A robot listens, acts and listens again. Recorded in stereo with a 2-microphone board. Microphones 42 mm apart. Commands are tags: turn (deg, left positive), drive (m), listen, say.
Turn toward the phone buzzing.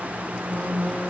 <turn deg="45"/>
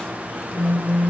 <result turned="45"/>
<turn deg="90"/>
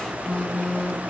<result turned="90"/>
<turn deg="25"/>
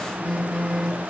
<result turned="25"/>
<turn deg="15"/>
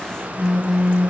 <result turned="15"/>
<say>Facing the phone buzzing, 1 to 2 m away.</say>